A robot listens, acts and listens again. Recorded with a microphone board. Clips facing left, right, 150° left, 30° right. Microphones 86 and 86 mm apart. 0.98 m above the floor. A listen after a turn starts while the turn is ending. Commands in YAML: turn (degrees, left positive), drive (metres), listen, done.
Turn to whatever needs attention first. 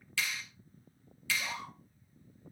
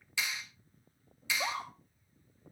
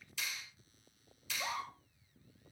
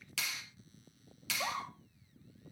turn: -85
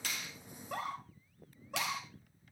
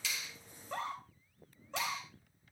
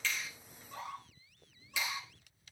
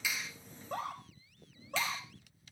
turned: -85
turn: 10
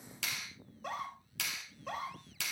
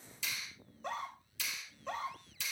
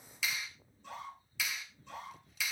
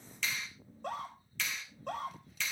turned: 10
done: "Found it: a scream, straight ahead."